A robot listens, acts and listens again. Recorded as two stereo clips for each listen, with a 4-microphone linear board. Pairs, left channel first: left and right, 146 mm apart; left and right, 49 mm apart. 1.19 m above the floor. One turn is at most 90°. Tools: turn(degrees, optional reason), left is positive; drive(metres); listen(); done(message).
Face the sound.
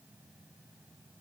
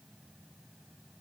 listen()
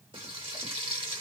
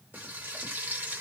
turn(degrees=-35, reason="The frying: about 35° right or 145° right.")
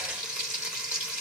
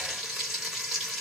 done("Facing the frying, 1 to 2 m away.")